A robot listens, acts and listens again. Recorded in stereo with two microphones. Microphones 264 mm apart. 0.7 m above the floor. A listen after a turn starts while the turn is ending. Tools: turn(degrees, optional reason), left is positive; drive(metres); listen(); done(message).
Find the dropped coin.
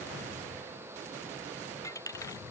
turn(degrees=30)
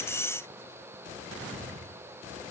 listen()
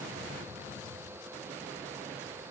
done("I heard a dropped coin, but can't make it out now. It was about 20° right or 140° left.")